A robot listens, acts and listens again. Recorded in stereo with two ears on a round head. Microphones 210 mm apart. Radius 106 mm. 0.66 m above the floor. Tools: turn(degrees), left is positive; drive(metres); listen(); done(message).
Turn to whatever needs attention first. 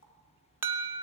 turn(degrees=-30)
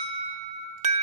turn(degrees=-140)
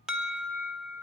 done("Facing the alarm, under 1 m away.")